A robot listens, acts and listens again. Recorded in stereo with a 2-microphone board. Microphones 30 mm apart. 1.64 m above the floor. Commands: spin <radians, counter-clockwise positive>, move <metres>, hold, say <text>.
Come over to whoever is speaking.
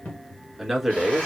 spin -0.52
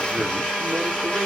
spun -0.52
hold
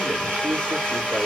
hold
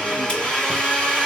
say I heard a man speaking, but can't make it out now. It was about 25° left or 145° right. I did not reach it.